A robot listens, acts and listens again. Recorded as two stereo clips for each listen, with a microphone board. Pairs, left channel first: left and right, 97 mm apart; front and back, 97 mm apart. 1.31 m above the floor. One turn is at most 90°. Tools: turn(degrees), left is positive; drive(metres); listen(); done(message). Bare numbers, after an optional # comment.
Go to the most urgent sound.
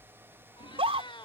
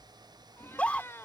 # The scream: 75° right.
turn(-75)
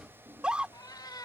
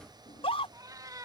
# The scream is now 10° right.
turn(-10)
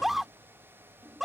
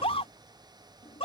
drive(1.0)
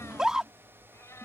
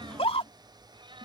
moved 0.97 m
drive(1.0)
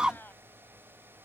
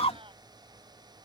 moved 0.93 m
# The scream is now 10° right.
turn(-10)
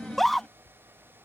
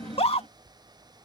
drive(1.0)
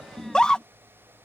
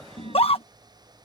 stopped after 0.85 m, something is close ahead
# The scream is now 10° left.
turn(10)
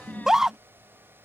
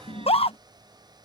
done("Arrived at the scream, straight ahead.")